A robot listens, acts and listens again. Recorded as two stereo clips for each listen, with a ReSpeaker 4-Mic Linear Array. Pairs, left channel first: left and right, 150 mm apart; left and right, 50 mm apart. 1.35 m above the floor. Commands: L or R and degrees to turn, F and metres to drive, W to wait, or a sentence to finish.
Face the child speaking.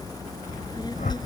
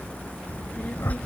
L30
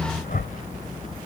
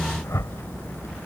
L125
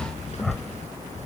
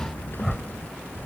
L50
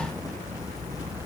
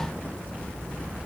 R15
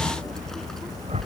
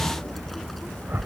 Found it: a child speaking, straight ahead.